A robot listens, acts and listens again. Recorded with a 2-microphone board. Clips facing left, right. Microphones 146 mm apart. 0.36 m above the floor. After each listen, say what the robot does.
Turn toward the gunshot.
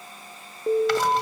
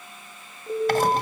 Keep listening.
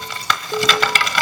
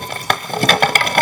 Keep listening.
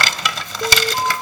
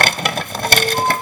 I can't make out a gunshot to turn to.